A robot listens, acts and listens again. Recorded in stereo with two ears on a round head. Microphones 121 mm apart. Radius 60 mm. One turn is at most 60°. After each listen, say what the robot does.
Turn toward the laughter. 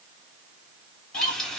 Turn 55° left.
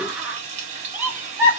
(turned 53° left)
Turn 15° right.
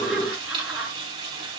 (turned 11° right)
Turn 10° right.
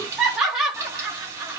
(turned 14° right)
Found it: laughter, straight ahead, 2 to 4 m away.